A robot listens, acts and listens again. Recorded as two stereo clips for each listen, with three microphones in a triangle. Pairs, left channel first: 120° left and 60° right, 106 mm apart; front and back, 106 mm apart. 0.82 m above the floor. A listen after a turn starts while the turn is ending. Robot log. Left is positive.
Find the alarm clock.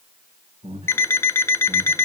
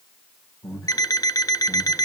note: The alarm clock: 50° left.
cmd yaw +50
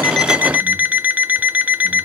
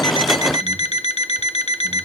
note: The alarm clock is now 15° left.
cmd yaw +15
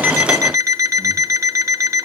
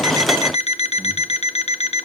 end: Found it: an alarm clock, straight ahead, under 1 m away.